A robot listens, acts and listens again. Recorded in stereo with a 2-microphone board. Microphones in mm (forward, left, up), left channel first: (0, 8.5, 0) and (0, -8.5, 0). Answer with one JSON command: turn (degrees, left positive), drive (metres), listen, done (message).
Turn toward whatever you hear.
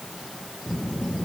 {"turn": 25}
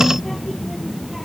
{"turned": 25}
{"done": "Facing the child speaking."}